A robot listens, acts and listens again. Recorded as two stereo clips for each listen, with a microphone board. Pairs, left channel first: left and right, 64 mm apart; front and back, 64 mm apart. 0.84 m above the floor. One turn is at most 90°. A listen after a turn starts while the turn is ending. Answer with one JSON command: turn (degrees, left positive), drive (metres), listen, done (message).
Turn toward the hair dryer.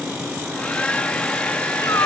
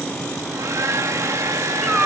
{"turn": 90}
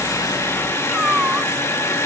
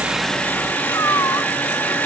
{"turn": 55}
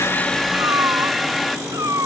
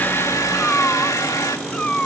{"done": "Facing the hair dryer, 1 to 2 m away."}